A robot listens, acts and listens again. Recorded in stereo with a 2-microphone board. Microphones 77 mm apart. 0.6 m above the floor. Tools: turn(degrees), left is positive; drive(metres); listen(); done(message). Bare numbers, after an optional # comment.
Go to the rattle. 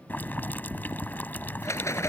# The rattle: about 35° left or 145° left.
turn(35)
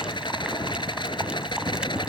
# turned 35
# So it is at 110° left.
turn(110)
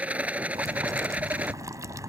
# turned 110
# The rattle is now 15° right.
turn(-15)
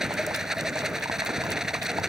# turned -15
drive(1.0)
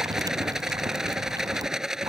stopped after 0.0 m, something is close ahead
done("Blocked. The rattle is further on, straight ahead.")